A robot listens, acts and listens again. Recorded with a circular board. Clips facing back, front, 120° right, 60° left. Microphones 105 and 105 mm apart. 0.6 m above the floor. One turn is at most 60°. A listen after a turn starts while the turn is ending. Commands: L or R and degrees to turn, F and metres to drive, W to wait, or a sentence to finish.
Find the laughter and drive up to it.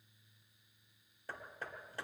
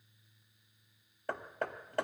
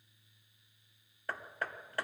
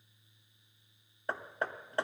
W
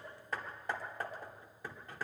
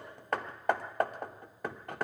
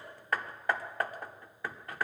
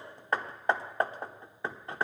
W
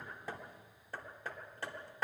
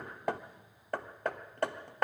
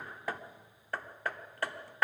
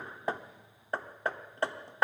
I can't make out laughter, only hammering.